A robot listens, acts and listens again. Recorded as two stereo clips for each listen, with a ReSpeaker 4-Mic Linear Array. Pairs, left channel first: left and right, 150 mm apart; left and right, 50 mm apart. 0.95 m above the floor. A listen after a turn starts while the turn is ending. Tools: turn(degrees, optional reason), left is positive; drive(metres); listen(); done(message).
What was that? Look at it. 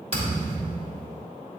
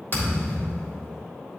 turn(degrees=45, reason="The thud: about 45° left or 135° left.")
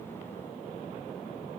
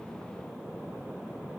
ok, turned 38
listen()
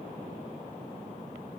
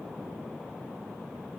done("I heard a thud, but can't make it out now. It was about 5° left or 100° left.")